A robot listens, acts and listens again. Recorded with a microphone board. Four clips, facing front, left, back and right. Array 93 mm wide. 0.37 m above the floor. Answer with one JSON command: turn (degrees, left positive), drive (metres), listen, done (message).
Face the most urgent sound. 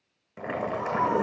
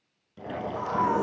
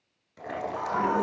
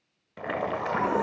{"turn": 160}
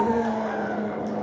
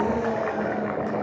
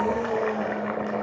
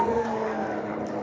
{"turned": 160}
{"done": "Found it: a scream, straight ahead, 2 to 4 m away."}